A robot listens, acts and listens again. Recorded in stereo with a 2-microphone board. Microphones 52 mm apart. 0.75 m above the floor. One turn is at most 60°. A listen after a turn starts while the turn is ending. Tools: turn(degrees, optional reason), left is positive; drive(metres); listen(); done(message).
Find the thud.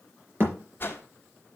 turn(degrees=-50, reason="The thud: about 50° right or 130° right.")
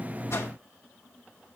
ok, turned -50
listen()
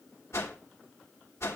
done("I heard a thud, but can't make it out now. It was about straight ahead or 80° right.")